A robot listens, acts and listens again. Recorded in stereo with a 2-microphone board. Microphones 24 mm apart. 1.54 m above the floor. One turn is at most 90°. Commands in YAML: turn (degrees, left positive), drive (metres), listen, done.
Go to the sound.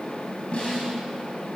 turn: 50
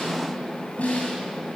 turn: 80
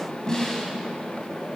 turn: 20
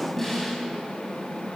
drive: 1.0
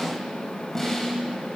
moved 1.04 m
turn: 10
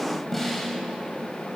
drive: 1.0
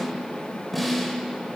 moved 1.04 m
drive: 1.0
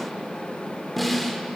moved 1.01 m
drive: 1.0
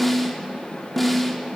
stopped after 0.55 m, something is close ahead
done: "Arrived at the snare drum, straight ahead."